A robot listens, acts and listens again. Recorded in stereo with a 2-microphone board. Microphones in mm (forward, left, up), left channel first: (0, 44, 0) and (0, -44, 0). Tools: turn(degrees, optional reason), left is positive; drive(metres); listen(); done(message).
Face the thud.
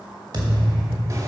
turn(degrees=-45, reason="The thud: about 45° right or 135° right.")
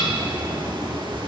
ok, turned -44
listen()
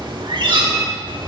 done("I heard a thud, but can't make it out now. It was about straight ahead or 90° right.")